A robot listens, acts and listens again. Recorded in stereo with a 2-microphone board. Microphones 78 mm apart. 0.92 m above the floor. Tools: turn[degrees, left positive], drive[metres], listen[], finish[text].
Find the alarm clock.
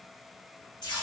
Action: listen[]
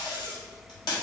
Action: listen[]
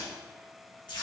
Action: finish[I can't make out an alarm clock, only tape being pulled.]